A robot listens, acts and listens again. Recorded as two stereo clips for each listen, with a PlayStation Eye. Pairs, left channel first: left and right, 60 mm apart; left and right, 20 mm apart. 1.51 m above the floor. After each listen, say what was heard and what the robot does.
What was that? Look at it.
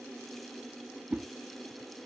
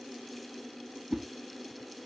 The whoosh: about 20° right or 160° right. Turn 20° right.
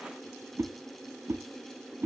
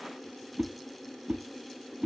So it is at 135° right. Turn 135° right.
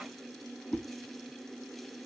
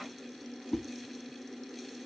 The whoosh is now 20° left. Turn 20° left.
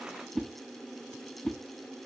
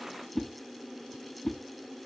Facing the whoosh, 1 to 2 m away.